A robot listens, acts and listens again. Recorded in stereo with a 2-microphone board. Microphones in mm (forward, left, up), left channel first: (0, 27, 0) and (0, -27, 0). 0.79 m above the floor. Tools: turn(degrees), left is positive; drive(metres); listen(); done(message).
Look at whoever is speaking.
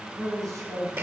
turn(degrees=-90)
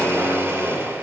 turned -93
listen()
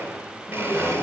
listen()
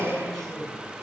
done("I heard a man speaking from this way, but can't make it out now.")